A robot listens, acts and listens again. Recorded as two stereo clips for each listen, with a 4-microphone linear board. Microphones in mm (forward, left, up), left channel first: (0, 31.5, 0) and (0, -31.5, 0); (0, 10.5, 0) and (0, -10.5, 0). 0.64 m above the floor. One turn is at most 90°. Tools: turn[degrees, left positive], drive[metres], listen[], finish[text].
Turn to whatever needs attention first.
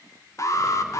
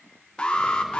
Thought: The alarm: about 55° left or 125° left.
Action: turn[55]
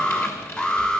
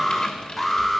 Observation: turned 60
Thought: So it is at 15° left.
Action: turn[15]
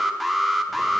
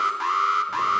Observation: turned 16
Action: finish[Facing the alarm, 1 to 2 m away.]